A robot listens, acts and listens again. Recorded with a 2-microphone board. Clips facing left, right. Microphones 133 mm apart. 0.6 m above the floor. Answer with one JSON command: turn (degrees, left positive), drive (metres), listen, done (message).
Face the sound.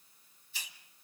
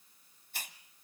{"turn": -55}
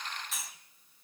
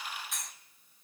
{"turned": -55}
{"done": "Found it: a hiss, straight ahead."}